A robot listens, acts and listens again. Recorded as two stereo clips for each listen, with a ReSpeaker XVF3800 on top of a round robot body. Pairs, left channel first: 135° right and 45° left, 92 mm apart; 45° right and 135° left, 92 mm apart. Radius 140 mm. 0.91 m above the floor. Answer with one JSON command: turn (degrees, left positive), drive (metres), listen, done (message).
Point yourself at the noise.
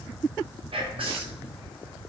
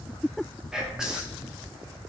{"turn": 50}
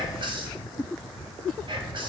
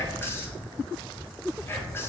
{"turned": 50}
{"turn": 20}
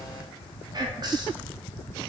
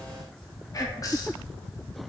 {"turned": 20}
{"done": "Found it: whispering, straight ahead."}